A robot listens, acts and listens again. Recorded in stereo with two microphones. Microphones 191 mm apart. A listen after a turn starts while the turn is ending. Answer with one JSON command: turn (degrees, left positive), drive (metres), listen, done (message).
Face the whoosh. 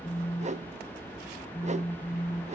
{"turn": -35}
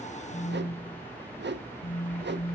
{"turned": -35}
{"turn": -105}
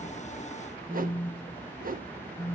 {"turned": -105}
{"turn": -50}
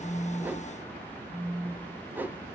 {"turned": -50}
{"turn": -10}
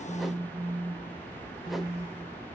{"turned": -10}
{"listen": true}
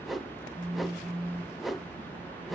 {"done": "Facing the whoosh."}